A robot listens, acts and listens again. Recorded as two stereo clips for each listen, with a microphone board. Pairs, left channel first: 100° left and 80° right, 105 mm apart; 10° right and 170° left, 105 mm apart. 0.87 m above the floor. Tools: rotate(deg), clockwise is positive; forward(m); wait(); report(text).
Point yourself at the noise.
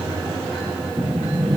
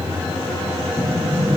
rotate(-10)
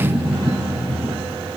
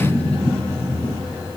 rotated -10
report("Facing the sliding door, over 4 m away.")